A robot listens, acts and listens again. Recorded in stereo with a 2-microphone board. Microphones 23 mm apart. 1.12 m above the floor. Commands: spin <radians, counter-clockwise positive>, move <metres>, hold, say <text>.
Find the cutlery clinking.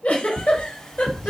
spin 0.44
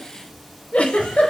hold
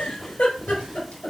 hold
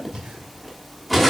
say Found it: cutlery clinking, straight ahead.